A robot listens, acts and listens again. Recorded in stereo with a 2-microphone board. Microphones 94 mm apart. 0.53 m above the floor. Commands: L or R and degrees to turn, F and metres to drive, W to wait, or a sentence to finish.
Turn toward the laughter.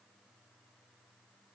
W
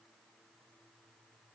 W
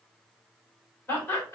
L30
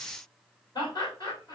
L120
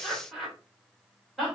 Found it: laughter, straight ahead.